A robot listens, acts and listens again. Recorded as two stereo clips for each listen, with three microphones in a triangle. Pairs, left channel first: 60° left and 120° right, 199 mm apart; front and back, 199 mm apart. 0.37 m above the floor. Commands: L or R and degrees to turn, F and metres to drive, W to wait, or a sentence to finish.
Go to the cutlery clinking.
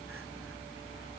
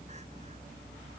W
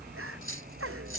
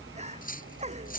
L50
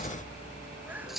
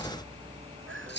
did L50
R30
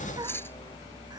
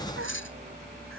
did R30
R20
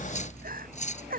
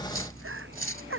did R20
F1.0
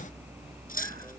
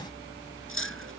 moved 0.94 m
L10
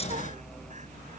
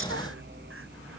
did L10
W
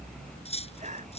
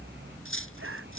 F1.0
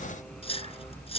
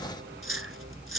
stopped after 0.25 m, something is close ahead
Blocked. The cutlery clinking is further on, straight ahead.